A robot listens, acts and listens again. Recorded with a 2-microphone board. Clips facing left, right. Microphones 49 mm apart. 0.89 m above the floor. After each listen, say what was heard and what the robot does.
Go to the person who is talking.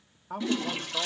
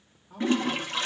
The man speaking: about 70° left or 110° left. Turn 70° left.
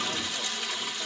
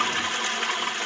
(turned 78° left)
Keep listening.
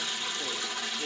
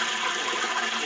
Keep listening.
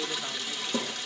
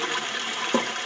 I heard a man speaking, but can't make it out now. It was about 10° right or 30° left. I did not reach it.